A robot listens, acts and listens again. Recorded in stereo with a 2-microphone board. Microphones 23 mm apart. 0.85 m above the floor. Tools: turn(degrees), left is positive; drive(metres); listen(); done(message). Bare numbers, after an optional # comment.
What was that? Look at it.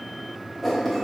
turn(-30)
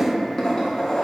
# So it is at 30° left.
turn(30)
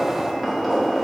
# The writing is now 10° right.
turn(-10)
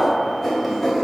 done("Facing the writing, 1 to 2 m away.")